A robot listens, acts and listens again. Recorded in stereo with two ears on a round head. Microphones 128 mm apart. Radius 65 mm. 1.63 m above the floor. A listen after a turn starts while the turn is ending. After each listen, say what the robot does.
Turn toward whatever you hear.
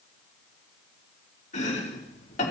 Turn 55° left.
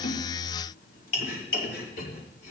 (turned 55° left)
Turn 70° left.
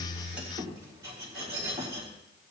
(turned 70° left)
Turn 25° right.
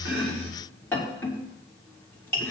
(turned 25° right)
Turn 15° left.
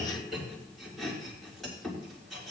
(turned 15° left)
Facing the chopping.